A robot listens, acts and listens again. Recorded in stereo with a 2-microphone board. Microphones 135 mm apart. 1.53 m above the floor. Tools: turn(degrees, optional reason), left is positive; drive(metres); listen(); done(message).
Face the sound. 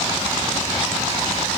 listen()
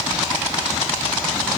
listen()
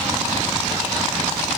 done("I can't make out anything to turn to.")